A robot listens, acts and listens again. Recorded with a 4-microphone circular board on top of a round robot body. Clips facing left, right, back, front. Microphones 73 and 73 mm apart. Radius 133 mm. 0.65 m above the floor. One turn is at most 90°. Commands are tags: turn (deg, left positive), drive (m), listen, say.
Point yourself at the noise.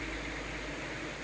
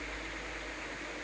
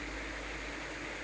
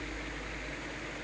<listen/>
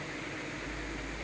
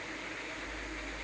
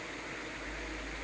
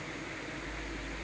<listen/>
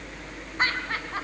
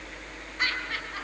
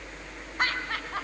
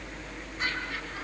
<turn deg="90"/>
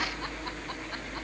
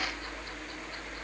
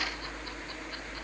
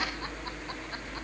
<turn deg="55"/>
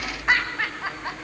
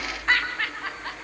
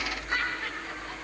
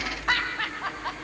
<turn deg="15"/>
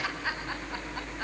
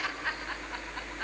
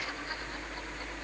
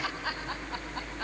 <say>Found it: laughter, straight ahead.</say>